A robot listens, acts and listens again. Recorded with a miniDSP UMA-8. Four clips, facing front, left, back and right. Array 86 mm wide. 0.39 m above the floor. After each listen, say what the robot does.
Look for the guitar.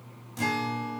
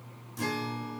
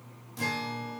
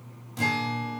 Turn 75° right.
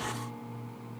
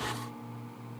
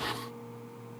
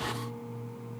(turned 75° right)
Keep listening.
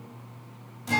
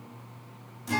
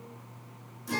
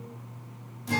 Turn 10° right.
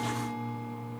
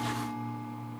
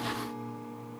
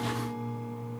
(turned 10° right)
Facing the guitar, 1 to 2 m away.